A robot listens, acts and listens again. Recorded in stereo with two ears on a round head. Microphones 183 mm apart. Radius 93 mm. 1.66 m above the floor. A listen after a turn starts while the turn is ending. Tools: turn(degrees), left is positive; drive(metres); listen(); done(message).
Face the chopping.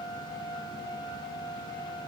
listen()
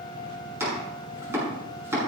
turn(degrees=-15)
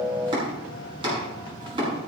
turn(degrees=-155)
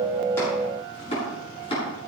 turn(degrees=30)
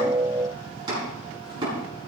turn(degrees=-20)
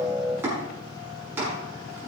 turn(degrees=-10)
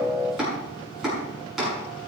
done("Found it: chopping, straight ahead, over 4 m away.")